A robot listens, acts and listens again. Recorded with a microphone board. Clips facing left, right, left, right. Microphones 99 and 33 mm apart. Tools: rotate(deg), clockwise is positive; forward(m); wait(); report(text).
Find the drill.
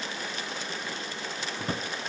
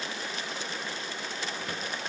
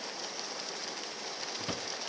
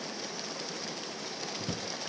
wait()
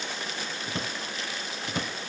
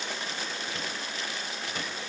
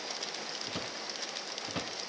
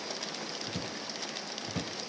wait()
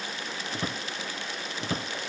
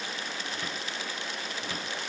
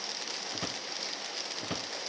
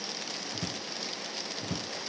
report("I can't make out a drill, only a drawer.")